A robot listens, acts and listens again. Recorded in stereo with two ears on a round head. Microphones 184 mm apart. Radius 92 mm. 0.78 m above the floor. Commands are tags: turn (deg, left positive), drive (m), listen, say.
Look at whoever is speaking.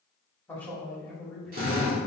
<turn deg="30"/>
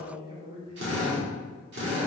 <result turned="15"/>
<turn deg="-30"/>
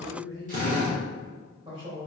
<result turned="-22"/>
<turn deg="-30"/>
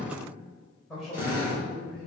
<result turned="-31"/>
<say>Found it: a man speaking, straight ahead, over 4 m away.</say>